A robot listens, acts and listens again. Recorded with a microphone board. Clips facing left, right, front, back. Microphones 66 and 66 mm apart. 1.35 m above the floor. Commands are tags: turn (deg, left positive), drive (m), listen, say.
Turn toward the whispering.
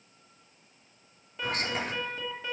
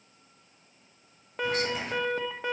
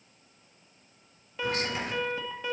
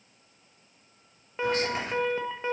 <turn deg="120"/>
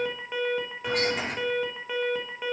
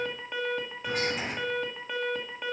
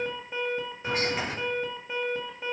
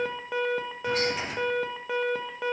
<turn deg="60"/>
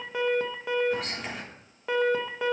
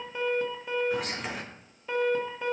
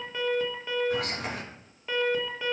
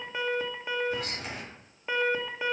<say>Found it: whispering, straight ahead.</say>